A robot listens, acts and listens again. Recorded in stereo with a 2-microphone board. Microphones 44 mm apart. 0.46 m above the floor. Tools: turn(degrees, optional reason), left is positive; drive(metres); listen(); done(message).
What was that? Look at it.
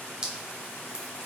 turn(degrees=-15, reason="The dripping: about 15° right or 165° right.")
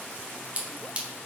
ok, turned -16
turn(degrees=-150, reason="So it is at 150° right.")
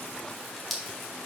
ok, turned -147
done("Facing the dripping, 1 to 2 m away.")